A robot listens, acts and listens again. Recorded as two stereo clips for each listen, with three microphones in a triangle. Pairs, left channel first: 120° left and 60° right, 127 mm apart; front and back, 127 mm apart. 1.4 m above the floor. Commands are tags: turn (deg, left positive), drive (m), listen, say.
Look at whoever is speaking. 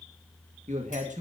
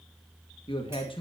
<turn deg="-45"/>
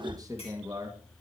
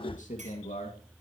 <say>Found it: a man speaking, straight ahead, 2 to 4 m away.</say>